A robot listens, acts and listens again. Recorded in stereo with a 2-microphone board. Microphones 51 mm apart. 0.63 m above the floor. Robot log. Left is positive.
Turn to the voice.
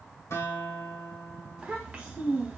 note: The child speaking: about 30° right or 150° right.
cmd yaw -30
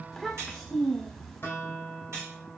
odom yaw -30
end: Found it: a child speaking, straight ahead, under 1 m away.